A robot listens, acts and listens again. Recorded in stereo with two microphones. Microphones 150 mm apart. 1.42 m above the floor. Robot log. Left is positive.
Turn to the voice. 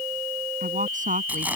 note: The woman speaking: about 60° right or 120° right.
cmd yaw -60
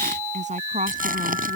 note: So it is at 55° right.
cmd yaw -55
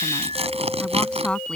end: Facing the woman speaking.